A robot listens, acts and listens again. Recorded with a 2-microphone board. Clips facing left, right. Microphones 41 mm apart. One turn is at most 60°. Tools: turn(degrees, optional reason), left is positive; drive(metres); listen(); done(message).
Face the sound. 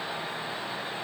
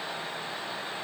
listen()
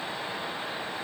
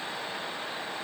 listen()
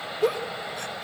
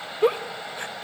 turn(degrees=-30, reason="The giggle: about 30° right or 150° right.")
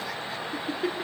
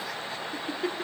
done("Facing the giggle.")